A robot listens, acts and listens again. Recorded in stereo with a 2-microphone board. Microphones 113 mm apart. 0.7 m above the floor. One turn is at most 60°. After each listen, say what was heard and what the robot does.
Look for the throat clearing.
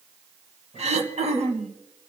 The throat clearing: about 75° right or 105° right. Turn 60° right.
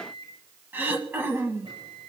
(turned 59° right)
So it is at 20° right. Turn 20° right.
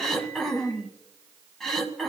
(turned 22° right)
Facing the throat clearing.